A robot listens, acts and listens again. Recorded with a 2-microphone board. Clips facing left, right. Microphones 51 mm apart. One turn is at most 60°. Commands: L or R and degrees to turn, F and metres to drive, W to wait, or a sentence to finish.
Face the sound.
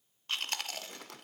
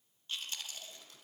L60
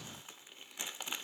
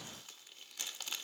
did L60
L25
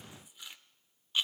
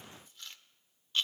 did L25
L15
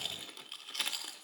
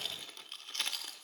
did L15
Found it: chewing, straight ahead, under 1 m away.